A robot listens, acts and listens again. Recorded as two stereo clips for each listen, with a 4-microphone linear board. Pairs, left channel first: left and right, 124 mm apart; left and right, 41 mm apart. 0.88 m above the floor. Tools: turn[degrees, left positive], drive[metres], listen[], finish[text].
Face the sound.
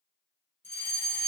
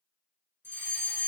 Thought: The fire alarm: about 75° right or 105° right.
Action: turn[-75]
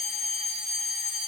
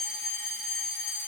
Action: finish[Facing the fire alarm.]